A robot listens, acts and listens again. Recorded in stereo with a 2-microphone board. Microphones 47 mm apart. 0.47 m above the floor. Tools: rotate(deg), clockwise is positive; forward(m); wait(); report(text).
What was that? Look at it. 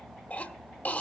rotate(-35)
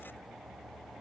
wait()
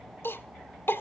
rotate(-100)
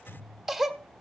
rotate(10)
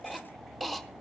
report("Facing the cough.")